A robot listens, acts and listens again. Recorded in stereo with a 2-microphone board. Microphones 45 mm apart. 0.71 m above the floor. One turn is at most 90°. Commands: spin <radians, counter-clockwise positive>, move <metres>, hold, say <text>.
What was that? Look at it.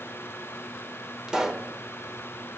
spin -0.26
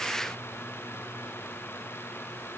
hold
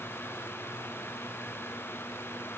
say I heard a pop, but can't make it out now. It was about straight ahead or 150° right.